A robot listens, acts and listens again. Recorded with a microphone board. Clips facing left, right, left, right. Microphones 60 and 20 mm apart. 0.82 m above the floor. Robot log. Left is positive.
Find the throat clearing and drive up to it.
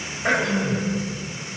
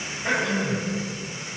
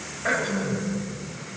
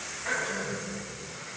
note: The throat clearing: about 50° left or 130° left.
cmd yaw +50
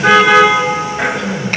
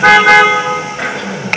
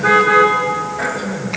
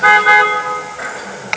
cmd fwd 1.0
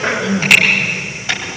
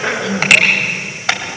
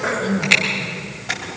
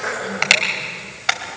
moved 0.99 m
cmd fwd 1.0
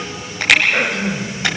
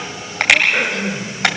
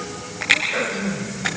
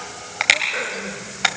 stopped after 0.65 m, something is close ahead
end: Blocked. The throat clearing is further on, straight ahead.